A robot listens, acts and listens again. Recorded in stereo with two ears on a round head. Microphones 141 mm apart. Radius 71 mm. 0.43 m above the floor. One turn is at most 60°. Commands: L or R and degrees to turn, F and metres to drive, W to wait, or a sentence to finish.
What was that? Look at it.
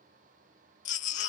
L50
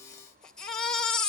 Found it: a baby crying, straight ahead.